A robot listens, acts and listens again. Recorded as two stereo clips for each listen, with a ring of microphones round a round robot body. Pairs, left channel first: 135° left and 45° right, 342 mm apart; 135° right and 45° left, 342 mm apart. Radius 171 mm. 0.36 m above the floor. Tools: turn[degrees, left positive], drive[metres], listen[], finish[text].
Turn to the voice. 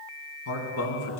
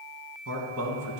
Thought: The man speaking: 90° left.
Action: turn[90]
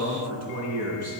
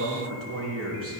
Action: finish[Facing the man speaking, 2 to 4 m away.]